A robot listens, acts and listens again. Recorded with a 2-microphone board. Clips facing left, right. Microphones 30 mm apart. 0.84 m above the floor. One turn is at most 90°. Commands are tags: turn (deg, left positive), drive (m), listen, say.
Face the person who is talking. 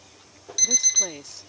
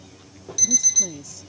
<turn deg="50"/>
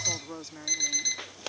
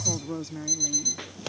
<say>Facing the woman speaking.</say>